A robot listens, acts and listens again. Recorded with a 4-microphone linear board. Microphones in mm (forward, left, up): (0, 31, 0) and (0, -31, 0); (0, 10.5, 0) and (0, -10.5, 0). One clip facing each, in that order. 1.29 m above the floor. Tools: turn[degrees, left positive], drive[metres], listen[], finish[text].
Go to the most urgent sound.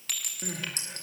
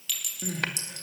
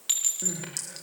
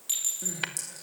Action: turn[30]
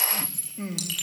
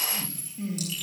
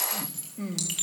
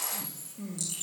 Thought: So it is at 135° left.
Action: turn[135]
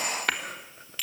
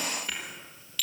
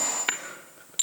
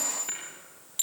Action: listen[]
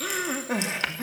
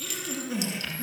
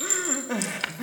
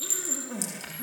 Thought: The crying is now 55° left.
Action: turn[55]
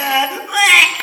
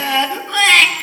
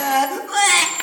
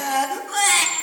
Thought: The crying is now 10° left.
Action: turn[10]
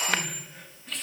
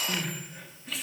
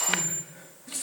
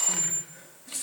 Action: listen[]
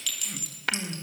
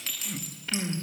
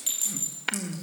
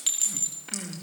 Action: drive[1.0]
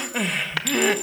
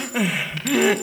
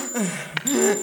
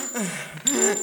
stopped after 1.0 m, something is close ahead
Action: finish[Arrived at the crying, straight ahead.]